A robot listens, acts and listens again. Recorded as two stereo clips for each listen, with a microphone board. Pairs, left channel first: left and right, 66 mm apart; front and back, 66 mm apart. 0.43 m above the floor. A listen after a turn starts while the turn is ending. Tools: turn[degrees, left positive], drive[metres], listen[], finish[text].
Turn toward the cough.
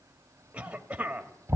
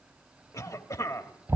Thought: The cough: 20° right.
Action: turn[-20]
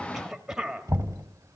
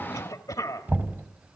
Action: finish[Facing the cough.]